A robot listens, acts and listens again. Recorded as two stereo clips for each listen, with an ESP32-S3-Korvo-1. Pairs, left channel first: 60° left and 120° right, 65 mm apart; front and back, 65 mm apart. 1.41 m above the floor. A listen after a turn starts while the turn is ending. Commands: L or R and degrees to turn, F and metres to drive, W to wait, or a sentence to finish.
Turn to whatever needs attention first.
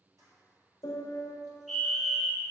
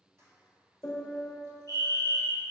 R25
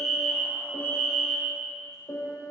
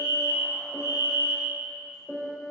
Found it: a fire alarm, straight ahead, 1 to 2 m away.